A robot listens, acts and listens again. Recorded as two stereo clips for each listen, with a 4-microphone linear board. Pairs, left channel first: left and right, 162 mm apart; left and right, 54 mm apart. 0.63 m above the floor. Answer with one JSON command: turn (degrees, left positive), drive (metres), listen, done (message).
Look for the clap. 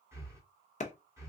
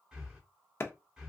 {"turn": 45}
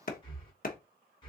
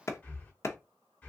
{"turn": 75}
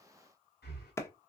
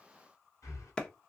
{"turn": 20}
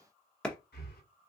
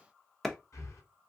{"done": "Found it: a clap, straight ahead, under 1 m away."}